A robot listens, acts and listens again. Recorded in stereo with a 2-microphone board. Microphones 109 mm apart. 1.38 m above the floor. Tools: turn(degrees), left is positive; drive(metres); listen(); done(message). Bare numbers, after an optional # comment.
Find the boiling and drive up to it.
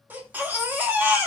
listen()
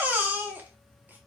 listen()
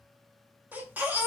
done("I can't make out boiling to turn to.")